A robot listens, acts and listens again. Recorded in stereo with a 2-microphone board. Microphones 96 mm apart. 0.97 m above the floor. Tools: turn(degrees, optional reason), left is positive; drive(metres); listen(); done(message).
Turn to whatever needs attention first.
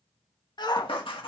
turn(degrees=50, reason="The shout: about 50° left or 130° left.")
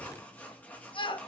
turn(degrees=70, reason="So it is at 70° left.")
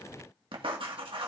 listen()
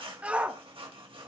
turn(degrees=-15, reason="The shout is now 15° right.")
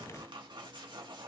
listen()
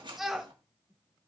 done("Found it: a shout, straight ahead, 1 to 2 m away.")